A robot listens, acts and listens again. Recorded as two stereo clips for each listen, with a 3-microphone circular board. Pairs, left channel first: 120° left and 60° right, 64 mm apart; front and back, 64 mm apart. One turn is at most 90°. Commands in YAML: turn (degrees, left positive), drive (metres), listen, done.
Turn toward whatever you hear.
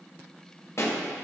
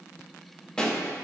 turn: 80
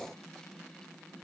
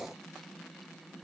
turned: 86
turn: -10
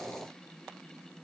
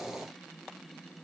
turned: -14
done: "Facing where the pop came from. I can't hear it now."